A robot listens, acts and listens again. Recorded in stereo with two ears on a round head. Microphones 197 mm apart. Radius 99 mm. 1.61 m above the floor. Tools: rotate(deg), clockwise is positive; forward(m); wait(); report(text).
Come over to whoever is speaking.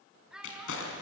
rotate(30)
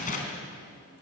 wait()
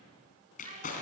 wait()
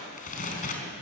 report("I heard a child speaking, but can't make it out now. It was about 25° left or 145° right. I did not reach it.")